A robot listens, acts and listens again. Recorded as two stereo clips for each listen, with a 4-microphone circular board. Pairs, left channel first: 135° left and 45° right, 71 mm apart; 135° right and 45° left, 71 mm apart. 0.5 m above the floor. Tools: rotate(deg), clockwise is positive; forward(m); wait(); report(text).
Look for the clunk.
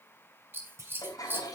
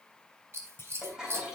rotate(90)
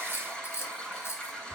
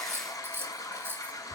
report("I heard a clunk from this way, but can't make it out now.")